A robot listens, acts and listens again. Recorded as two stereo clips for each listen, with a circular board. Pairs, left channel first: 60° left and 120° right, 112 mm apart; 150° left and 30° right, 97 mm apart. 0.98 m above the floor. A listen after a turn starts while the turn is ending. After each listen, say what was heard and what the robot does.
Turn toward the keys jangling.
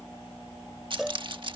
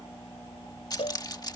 The keys jangling: 165° right. Turn 165° right.
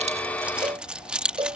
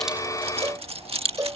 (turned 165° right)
The keys jangling is now 40° right. Turn 40° right.
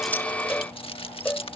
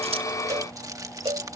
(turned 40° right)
The keys jangling is now 25° left. Turn 25° left.
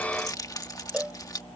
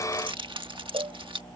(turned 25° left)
Facing the keys jangling.